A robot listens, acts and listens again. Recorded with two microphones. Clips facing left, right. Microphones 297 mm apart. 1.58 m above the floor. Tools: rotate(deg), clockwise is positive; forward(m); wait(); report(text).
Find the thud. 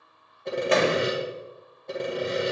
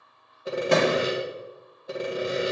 rotate(50)
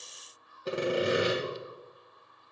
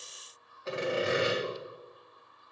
wait()
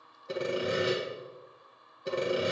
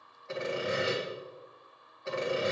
report("I heard a thud, but can't make it out now. It was about straight ahead or 80° right.")